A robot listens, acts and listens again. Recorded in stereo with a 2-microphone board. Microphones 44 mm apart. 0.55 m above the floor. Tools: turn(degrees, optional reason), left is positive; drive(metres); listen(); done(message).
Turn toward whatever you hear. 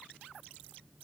listen()
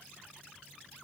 listen()
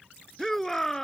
turn(degrees=30)
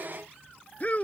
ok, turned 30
turn(degrees=145, reason="So it is at 145° left.")
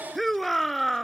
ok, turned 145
done("Found it: a shout, straight ahead.")